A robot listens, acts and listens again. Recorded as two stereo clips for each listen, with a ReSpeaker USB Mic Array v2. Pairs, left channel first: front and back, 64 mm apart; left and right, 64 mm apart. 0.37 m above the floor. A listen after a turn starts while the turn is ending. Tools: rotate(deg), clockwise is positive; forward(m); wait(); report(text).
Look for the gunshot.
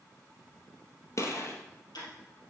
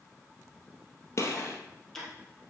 rotate(-45)
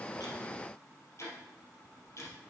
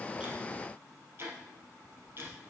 report("I heard a gunshot from this way, but can't make it out now.")